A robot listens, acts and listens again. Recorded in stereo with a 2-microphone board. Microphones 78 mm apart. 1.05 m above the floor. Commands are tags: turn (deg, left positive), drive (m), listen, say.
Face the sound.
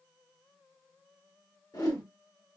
<turn deg="60"/>
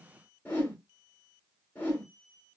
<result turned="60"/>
<turn deg="30"/>
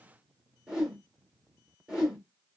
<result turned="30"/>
<turn deg="-10"/>
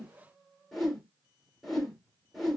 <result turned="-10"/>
<say>Facing the whoosh, 1 to 2 m away.</say>